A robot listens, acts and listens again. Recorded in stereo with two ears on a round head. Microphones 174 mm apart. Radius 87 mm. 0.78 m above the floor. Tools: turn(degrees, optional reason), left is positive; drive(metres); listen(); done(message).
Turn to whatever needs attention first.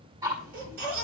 turn(degrees=-55, reason="The baby crying: about 55° right or 125° right.")
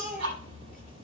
done("Found it: a baby crying, straight ahead, over 4 m away.")